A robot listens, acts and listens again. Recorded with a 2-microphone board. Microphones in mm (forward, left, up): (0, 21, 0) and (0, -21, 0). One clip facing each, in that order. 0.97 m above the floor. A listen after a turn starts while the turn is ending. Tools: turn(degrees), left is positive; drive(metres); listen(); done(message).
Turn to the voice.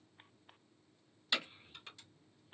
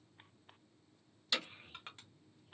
turn(degrees=-75)
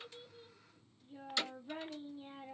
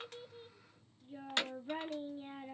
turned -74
turn(degrees=-30)
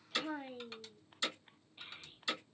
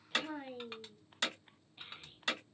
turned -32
done("Found it: a child speaking, straight ahead.")